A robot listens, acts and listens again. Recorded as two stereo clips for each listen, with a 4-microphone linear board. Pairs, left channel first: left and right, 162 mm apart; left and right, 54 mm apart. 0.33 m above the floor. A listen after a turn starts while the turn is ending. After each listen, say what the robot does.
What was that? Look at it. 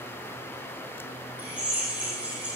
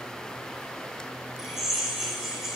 Turn 30° right.
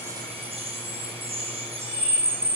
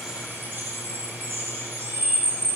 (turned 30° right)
Turn 145° right.
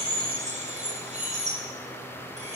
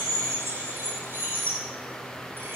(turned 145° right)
Turn 45° right.
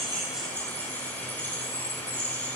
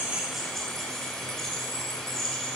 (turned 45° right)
Turn 10° left.
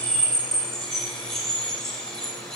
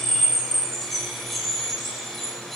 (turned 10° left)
Facing the drill, over 4 m away.